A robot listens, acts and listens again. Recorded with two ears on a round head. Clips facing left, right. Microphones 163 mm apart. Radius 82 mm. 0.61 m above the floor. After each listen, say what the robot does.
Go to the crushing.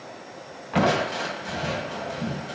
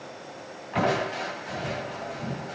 Turn 60° left.
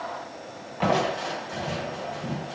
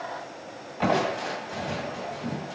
Drive 1.0 m forward.
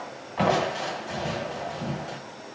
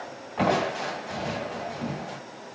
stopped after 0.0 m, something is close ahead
Blocked. The crushing is further on, straight ahead.